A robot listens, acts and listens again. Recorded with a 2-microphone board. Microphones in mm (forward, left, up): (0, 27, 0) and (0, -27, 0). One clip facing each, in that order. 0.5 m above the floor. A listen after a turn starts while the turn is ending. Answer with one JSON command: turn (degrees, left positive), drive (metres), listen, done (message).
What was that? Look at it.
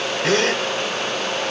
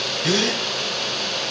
{"turn": 45}
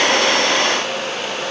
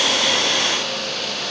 {"listen": true}
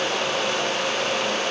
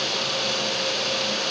{"done": "I heard a gasp, but can't make it out now. It was about straight ahead or 90° left."}